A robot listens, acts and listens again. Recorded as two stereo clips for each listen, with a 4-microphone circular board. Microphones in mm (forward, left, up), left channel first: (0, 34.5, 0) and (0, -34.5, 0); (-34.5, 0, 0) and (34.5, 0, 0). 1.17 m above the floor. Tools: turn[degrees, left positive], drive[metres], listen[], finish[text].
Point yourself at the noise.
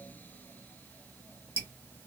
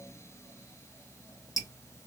Thought: The dripping: 145° right.
Action: turn[-145]
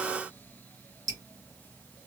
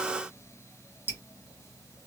Thought: The dripping is now 55° right.
Action: turn[-55]
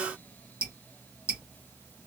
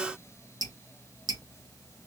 Thought: The dripping is now 15° right.
Action: turn[-15]
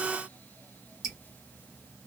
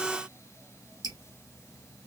Action: finish[Facing the dripping.]